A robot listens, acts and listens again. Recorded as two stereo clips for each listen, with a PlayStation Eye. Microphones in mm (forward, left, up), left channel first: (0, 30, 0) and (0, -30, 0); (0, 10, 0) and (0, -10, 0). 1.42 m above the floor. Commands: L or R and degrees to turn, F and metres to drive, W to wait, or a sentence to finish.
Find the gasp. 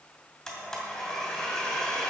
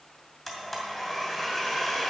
W
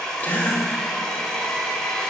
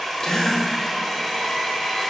L30
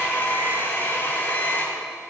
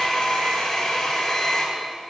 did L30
W
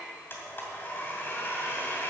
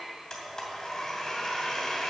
I heard a gasp, but can't make it out now. It was about straight ahead or 120° left.